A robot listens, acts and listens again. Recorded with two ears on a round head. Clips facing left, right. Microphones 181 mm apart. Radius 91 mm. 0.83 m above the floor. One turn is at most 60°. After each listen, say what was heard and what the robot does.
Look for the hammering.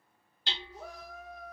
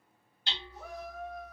The hammering: about 60° left or 120° left. Turn 60° left.
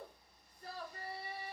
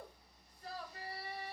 Keep listening.
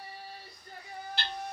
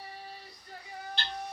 Facing the hammering, 1 to 2 m away.